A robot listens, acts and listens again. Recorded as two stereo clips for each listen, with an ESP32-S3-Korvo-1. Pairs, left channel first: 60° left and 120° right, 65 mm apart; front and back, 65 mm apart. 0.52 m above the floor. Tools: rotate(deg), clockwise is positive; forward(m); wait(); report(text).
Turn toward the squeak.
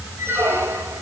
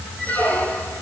rotate(65)
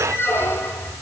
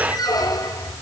report("Facing the squeak, 2 to 4 m away.")